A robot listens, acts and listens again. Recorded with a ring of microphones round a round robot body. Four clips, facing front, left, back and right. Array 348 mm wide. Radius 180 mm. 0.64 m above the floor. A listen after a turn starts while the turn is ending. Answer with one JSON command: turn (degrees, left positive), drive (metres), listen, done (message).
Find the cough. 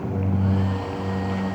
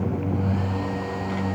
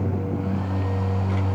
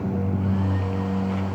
{"listen": true}
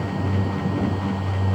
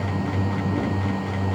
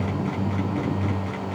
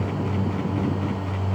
{"listen": true}
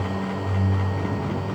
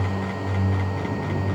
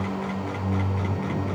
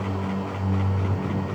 {"done": "I can't make out a cough to turn to."}